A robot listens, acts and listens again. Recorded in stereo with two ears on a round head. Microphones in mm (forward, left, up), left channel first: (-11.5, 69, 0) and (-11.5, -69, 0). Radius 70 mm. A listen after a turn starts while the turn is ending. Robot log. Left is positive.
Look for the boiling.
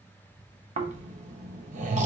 cmd idle
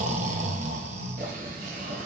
note: The boiling: about 55° right or 125° right.
cmd yaw -55
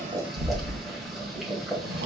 end: Found it: boiling, straight ahead, 1 to 2 m away.